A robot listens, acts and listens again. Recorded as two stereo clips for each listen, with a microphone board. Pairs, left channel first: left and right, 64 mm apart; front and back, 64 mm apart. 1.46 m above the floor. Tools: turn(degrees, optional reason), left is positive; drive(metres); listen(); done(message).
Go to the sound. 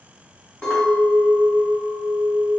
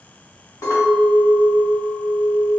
turn(degrees=10, reason="The clink: 10° left.")
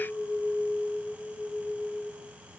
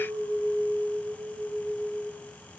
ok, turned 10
drive(metres=1.0)
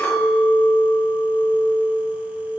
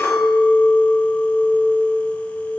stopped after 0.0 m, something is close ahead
done("Something is in my way. I am facing the clink but have not reached it.")